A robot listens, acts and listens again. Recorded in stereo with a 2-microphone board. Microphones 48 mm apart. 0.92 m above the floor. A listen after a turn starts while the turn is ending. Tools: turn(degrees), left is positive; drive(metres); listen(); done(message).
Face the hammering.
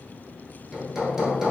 turn(degrees=-30)
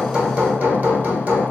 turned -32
turn(degrees=-135)
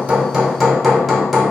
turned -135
done("Found it: hammering, straight ahead.")